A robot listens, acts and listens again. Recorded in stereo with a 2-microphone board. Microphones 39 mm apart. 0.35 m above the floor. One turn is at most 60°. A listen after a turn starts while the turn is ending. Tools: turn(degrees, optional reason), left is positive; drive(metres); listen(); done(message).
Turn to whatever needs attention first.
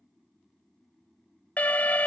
turn(degrees=45, reason="The alarm: about 45° left or 135° left.")
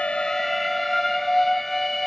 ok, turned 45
turn(degrees=10, reason="So it is at 10° left.")
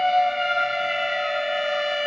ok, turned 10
done("Found it: an alarm, straight ahead.")